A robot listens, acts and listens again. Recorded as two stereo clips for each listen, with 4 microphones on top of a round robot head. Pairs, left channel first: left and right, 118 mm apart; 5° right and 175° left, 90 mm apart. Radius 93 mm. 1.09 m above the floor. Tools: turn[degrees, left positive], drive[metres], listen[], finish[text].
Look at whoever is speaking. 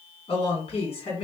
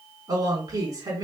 Thought: The woman speaking: 125° left.
Action: turn[125]
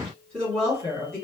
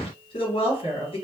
Action: finish[Found it: a woman speaking, straight ahead, 2 to 4 m away.]